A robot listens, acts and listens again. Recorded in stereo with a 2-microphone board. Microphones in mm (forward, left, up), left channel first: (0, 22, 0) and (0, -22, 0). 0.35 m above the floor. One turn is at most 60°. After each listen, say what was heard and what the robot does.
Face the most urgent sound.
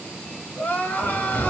The crying: about 50° left or 130° left. Turn 50° left.
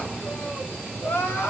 So it is at 80° left. Turn 60° left.
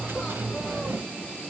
Nothing new. It was at 20° left. Turn 20° left.
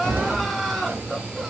Facing the crying.